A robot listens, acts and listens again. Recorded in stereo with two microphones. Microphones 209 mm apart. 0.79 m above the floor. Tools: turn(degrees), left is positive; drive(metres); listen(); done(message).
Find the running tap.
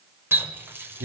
turn(degrees=-30)
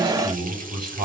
listen()
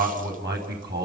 listen()
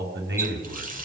turn(degrees=-140)
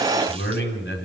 listen()
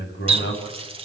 turn(degrees=-25)
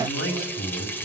turn(degrees=10)
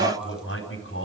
listen()
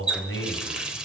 done("Facing the running tap, 2 to 4 m away.")